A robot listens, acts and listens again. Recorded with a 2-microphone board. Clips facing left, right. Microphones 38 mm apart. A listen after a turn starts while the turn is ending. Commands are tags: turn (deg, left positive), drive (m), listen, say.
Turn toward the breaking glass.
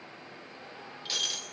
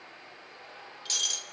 <turn deg="30"/>
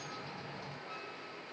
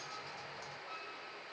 <listen/>
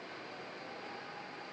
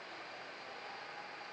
<say>I heard breaking glass, but can't make it out now. It was about 15° right or 135° left.</say>